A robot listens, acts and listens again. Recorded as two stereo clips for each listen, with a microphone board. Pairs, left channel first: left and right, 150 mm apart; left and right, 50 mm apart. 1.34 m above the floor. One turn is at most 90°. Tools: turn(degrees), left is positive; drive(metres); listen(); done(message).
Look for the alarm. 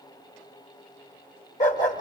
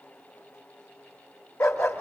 listen()
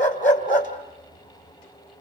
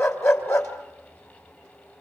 listen()
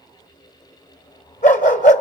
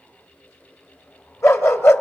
done("I can't make out an alarm, only a dog barking.")